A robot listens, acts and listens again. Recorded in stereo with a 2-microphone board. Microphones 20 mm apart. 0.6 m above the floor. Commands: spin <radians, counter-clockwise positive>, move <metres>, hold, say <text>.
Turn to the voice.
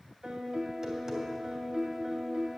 hold
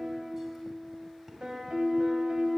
hold
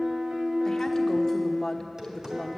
spin 0.52
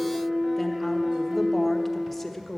spin 0.17
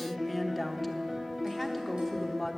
say Found it: a woman speaking, straight ahead, 1 to 2 m away.